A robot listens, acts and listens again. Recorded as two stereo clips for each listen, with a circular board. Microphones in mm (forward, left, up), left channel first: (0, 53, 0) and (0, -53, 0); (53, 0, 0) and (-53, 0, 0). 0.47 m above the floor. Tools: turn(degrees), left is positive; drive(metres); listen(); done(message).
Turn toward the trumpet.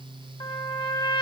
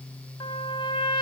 turn(degrees=45)
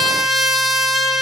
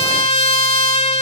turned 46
done("Facing the trumpet.")